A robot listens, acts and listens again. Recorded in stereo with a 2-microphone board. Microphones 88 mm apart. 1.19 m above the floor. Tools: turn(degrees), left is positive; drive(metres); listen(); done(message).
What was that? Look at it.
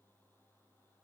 listen()
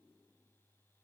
listen()
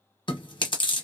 turn(degrees=65)
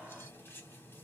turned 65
listen()
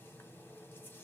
listen()
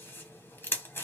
turn(degrees=25)
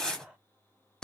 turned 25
turn(degrees=10)
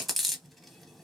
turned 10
done("Found it: chewing, straight ahead.")